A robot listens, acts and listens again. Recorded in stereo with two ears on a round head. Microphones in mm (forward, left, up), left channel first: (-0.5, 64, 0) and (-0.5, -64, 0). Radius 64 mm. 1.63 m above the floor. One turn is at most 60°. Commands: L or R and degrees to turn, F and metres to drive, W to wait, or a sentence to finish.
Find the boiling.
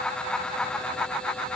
W
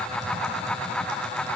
W
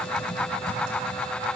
I can't make out boiling, only typing on a keyboard.